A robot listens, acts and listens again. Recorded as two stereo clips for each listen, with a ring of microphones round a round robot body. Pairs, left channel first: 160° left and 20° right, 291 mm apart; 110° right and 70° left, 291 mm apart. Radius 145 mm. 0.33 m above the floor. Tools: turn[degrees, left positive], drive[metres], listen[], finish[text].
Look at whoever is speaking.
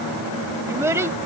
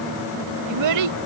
Thought: The child speaking: 55° left.
Action: turn[55]
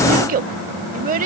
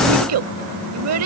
Thought: The child speaking is now 35° left.
Action: turn[35]
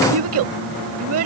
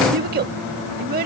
Thought: The child speaking is now 10° left.
Action: turn[10]
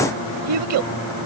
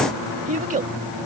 Action: finish[Facing the child speaking.]